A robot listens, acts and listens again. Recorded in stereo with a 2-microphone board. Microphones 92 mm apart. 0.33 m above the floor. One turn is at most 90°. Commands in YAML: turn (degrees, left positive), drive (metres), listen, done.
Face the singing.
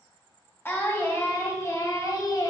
turn: 45
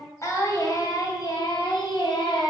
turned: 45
turn: 60
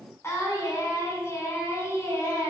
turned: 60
turn: 30
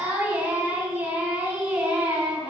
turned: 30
turn: -15
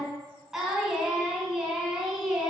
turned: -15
done: "Facing the singing."